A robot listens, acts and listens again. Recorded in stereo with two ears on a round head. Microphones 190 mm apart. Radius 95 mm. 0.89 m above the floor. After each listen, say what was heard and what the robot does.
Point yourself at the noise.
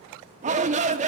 The shout: about 35° right or 145° right. Turn 35° right.
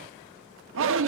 So it is at 115° right. Turn 115° right.
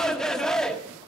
Facing the shout.